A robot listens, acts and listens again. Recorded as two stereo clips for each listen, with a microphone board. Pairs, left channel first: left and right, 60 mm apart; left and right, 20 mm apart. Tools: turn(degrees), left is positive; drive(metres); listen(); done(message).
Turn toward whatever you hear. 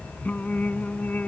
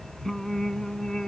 turn(degrees=25)
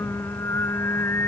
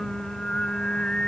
turn(degrees=135)
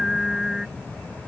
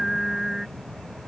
done("Found it: singing, straight ahead.")